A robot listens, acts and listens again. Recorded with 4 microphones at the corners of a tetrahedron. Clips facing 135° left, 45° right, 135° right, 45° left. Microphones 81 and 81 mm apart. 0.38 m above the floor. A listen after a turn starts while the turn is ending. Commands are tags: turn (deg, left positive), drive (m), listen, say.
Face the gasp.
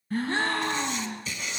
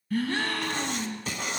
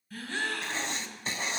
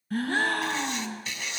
<turn deg="75"/>
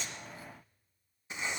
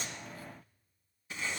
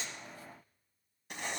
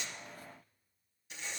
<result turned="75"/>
<say>I heard a gasp from this way, but can't make it out now.</say>